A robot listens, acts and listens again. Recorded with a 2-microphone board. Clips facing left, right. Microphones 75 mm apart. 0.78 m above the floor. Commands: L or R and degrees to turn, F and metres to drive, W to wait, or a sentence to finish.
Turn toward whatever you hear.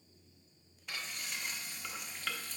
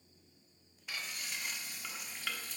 R30
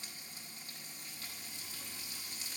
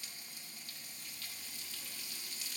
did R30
L30
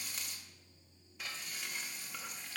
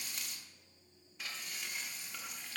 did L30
Facing the frying, 1 to 2 m away.